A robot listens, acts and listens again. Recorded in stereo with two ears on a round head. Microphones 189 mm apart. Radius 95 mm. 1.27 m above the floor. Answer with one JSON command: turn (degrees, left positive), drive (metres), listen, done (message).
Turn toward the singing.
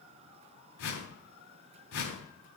{"listen": true}
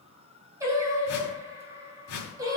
{"turn": -20}
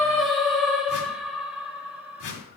{"turn": -30}
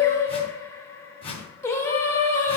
{"turn": 15}
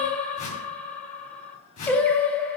{"done": "Facing the singing."}